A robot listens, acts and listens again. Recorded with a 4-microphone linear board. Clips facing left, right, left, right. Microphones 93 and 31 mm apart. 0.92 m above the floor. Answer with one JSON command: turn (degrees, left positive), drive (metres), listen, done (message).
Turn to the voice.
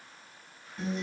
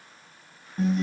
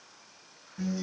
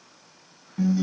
{"listen": true}
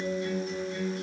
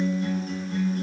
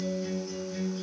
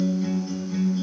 {"listen": true}
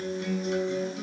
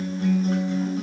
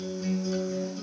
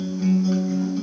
{"done": "I can't make out anyone speaking, only a guitar."}